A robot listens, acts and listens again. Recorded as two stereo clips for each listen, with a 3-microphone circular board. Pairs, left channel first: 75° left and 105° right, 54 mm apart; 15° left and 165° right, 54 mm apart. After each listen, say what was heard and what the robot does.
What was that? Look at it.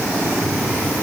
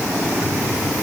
Keep listening.
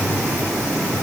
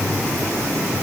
Keep listening.
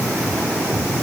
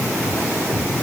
I can't make out anything.